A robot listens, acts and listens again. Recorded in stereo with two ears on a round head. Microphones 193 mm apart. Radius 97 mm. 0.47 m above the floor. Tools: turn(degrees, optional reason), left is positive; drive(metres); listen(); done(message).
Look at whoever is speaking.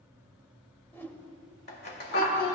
turn(degrees=60, reason="The child speaking: about 60° left or 120° left.")
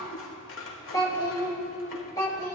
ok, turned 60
turn(degrees=20, reason="So it is at 20° left.")
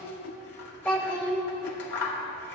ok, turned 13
done("Facing the child speaking.")